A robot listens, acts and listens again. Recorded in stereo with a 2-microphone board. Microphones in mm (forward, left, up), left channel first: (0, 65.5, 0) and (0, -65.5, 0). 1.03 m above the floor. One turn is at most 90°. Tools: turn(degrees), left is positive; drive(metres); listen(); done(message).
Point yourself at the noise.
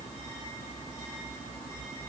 listen()
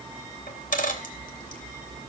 turn(degrees=90)
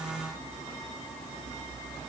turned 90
done("Facing where the dropped coin came from. I can't hear it now.")